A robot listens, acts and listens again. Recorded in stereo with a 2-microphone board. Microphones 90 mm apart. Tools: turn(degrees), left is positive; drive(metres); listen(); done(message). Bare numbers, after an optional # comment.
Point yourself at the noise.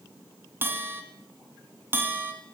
# The bell: about 25° right or 155° right.
turn(-25)
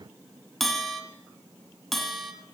done("Found it: a bell, straight ahead, 1 to 2 m away.")